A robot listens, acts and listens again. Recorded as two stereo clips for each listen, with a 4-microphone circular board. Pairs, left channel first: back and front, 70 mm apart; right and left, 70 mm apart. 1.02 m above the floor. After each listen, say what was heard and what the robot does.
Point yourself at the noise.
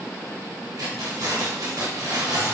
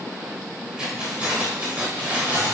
The keys jangling: 25° left. Turn 25° left.
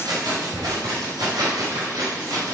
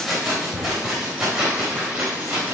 The keys jangling is now 15° left. Turn 15° left.
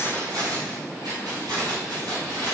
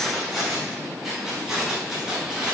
The keys jangling is now 10° left. Turn 10° left.
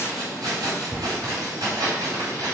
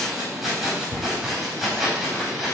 Found it: keys jangling, straight ahead, over 4 m away.